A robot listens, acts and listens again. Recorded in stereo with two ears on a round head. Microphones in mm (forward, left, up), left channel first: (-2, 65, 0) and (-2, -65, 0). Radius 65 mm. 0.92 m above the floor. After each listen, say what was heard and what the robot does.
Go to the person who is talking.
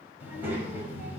Turn 30° right.
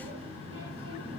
So it is at 140° right. Turn 140° right.
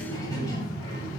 The child speaking is now 25° left. Turn 25° left.
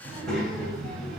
Drive 1.0 m forward.
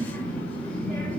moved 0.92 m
The child speaking is now 10° left. Turn 10° left.
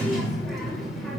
Drive 1.0 m forward.
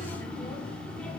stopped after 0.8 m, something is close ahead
Arrived at the child speaking, straight ahead.